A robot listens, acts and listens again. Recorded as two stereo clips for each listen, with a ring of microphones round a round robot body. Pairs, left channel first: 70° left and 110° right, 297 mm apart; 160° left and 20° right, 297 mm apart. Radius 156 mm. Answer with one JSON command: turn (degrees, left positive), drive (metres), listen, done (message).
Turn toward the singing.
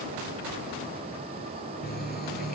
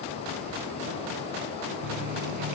{"listen": true}
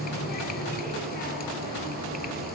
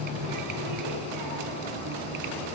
{"listen": true}
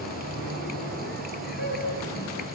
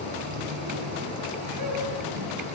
{"done": "I can't make out singing, only a running tap."}